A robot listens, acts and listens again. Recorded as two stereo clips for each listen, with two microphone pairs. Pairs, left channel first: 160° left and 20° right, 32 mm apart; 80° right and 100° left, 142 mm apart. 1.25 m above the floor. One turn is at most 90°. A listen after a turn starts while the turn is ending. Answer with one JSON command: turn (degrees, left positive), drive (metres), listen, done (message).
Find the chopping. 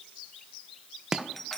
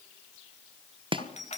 {"turn": 50}
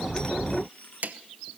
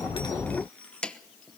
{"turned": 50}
{"done": "Found it: chopping, straight ahead."}